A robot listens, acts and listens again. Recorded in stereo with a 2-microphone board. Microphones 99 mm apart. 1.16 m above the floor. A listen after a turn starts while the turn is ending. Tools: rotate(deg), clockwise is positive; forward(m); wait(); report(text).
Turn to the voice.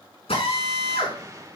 wait()
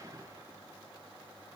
wait()
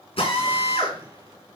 report("I can't make out anyone speaking, only a drill and a whoosh.")